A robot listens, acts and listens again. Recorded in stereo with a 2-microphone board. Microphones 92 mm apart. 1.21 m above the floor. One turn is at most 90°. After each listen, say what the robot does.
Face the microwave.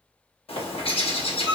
Turn 60° left.
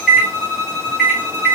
Facing the microwave, 1 to 2 m away.